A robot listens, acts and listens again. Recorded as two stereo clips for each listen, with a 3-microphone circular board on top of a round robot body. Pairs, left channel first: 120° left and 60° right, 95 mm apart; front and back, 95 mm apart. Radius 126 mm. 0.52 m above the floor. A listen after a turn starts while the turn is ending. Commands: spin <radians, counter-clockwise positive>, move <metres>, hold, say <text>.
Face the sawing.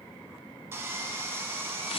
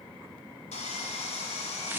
say Found it: sawing, straight ahead, 1 to 2 m away.